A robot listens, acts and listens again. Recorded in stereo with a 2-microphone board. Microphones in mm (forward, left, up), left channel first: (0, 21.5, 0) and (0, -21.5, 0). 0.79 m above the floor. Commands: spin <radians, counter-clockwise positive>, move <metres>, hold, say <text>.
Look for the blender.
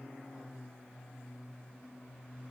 hold
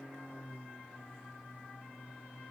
hold
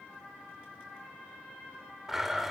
spin -0.52
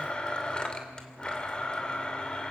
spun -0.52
spin 0.35
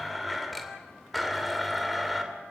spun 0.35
say Found it: a blender, straight ahead.